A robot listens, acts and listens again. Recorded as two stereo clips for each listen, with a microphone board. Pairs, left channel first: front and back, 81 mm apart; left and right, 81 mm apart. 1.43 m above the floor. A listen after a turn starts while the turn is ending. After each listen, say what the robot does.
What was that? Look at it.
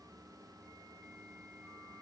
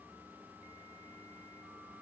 Keep listening.
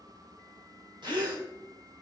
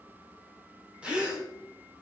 Turn 165° right.
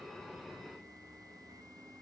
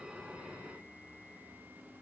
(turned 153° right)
Turn 15° right.
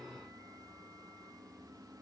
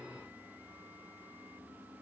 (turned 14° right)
Facing where the gasp came from. I can't hear it now.